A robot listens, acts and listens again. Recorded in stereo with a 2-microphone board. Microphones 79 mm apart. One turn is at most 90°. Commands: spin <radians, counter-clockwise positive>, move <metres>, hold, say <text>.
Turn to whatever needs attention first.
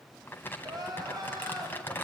spin -0.87
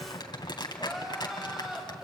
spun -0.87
say Facing the crying, over 4 m away.